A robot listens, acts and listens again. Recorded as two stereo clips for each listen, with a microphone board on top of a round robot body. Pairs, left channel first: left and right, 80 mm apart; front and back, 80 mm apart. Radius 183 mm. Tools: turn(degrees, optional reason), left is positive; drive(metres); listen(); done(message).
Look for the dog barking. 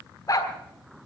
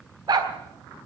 turn(degrees=140, reason="The dog barking: 140° left.")
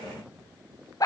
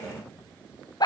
turn(degrees=40, reason="The dog barking is now 40° left.")
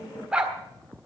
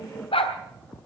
turn(degrees=-10, reason="The dog barking is now 10° right.")
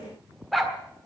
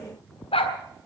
done("Facing the dog barking, 1 to 2 m away.")